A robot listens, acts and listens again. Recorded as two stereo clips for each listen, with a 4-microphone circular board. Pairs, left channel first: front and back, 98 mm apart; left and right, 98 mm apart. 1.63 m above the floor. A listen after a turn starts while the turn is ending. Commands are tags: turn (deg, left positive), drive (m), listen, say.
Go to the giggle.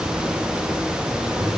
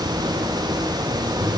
<listen/>
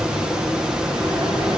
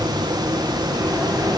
<listen/>
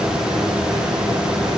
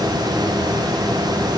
<say>I can't make out a giggle.</say>